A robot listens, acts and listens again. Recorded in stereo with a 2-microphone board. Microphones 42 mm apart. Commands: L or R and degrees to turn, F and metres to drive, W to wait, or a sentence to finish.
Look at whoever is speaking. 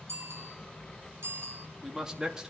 R15
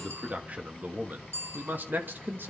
R125
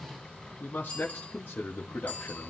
L60
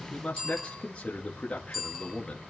L30
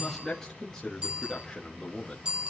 L10
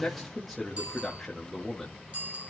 Found it: a man speaking, straight ahead.